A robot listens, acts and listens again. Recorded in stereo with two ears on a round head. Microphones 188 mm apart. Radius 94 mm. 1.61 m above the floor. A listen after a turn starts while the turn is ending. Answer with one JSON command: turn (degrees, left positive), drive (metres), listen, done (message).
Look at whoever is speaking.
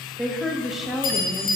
{"turn": 30}
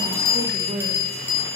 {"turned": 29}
{"turn": -30}
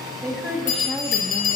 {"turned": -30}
{"done": "Found it: a woman speaking, straight ahead."}